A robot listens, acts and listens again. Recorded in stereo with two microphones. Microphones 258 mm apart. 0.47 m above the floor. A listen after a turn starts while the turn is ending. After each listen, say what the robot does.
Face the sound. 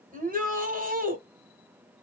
Turn 30° right.
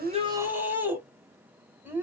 Turn 10° right.
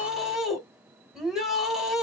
Facing the shout, 1 to 2 m away.